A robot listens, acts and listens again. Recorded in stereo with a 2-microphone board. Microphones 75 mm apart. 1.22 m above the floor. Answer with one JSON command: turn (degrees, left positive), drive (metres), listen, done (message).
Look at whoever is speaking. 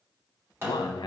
{"turn": 90}
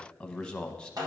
{"turn": 10}
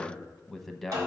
{"done": "Facing the man speaking, under 1 m away."}